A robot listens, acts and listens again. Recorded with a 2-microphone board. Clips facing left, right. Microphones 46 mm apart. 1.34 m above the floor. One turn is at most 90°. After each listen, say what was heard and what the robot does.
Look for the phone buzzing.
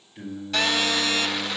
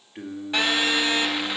The phone buzzing: about 20° right or 160° right. Turn 20° right.
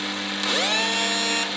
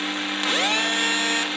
So it is at 135° right. Turn 90° right.
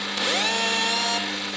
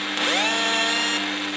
The phone buzzing is now 70° right. Turn 70° right.
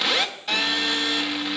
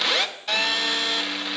Found it: a phone buzzing, straight ahead.